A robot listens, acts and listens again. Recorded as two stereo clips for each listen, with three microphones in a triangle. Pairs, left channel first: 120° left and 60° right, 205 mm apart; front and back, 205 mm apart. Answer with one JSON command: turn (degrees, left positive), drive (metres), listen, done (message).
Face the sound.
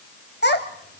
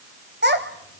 {"turn": 150}
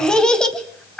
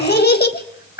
{"turn": 35}
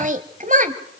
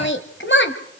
{"turn": -15}
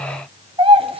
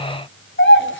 {"done": "Found it: a child speaking, straight ahead."}